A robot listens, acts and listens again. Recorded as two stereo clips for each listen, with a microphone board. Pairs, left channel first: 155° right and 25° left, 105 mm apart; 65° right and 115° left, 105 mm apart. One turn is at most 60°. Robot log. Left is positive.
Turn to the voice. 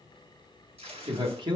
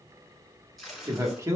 note: The man speaking: 55° left.
cmd yaw +55
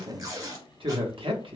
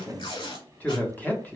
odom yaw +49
end: Found it: a man speaking, straight ahead.